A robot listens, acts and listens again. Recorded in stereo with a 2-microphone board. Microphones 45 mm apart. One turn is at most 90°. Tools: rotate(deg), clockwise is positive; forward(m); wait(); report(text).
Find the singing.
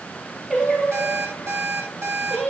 rotate(30)
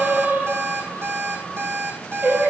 rotate(90)
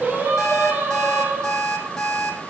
rotate(40)
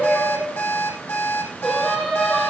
report("Found it: singing, straight ahead.")